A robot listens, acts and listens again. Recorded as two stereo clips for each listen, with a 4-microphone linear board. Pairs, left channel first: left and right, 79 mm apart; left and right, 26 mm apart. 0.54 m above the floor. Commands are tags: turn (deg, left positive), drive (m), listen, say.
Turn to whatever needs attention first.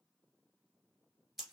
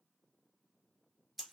<listen/>
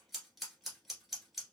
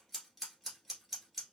<listen/>
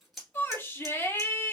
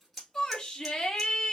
<turn deg="30"/>
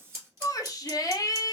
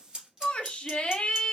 <turn deg="110"/>
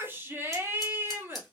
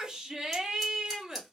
<turn deg="-35"/>
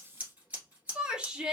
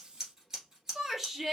<turn deg="-15"/>
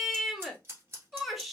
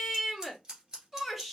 <say>Facing the shout, 1 to 2 m away.</say>